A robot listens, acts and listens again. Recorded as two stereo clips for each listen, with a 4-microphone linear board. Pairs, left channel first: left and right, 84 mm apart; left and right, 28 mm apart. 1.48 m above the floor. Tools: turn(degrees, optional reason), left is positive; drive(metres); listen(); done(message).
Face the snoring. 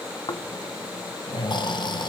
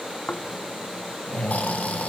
turn(degrees=55, reason="The snoring: about 55° left or 125° left.")
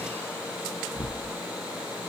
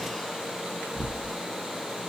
turn(degrees=25, reason="So it is at 25° left.")
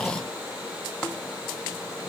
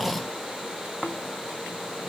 turn(degrees=10, reason="The snoring is now 10° left.")
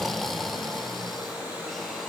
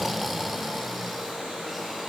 done("Found it: snoring, straight ahead, under 1 m away.")